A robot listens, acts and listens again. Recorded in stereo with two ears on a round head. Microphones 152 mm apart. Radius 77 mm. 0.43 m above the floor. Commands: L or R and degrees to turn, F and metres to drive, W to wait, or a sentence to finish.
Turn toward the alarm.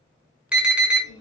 R30
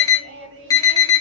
L20
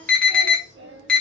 Found it: an alarm, straight ahead, under 1 m away.